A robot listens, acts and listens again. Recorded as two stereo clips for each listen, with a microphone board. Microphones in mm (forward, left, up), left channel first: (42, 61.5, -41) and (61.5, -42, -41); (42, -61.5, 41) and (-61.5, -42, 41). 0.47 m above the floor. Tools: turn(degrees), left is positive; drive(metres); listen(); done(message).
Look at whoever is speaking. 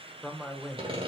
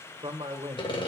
turn(degrees=-170)
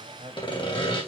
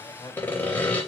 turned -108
turn(degrees=-60)
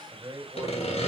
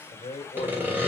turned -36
turn(degrees=-25)
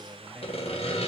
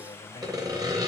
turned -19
done("Facing the man speaking, 2 to 4 m away.")